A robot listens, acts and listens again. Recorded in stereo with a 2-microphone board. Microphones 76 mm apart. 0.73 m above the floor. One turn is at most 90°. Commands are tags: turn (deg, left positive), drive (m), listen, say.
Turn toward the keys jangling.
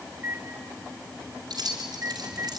<turn deg="-55"/>
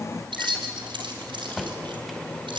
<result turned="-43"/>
<turn deg="-85"/>
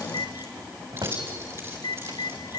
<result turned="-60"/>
<turn deg="-35"/>
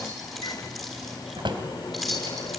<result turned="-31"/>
<say>Facing the keys jangling.</say>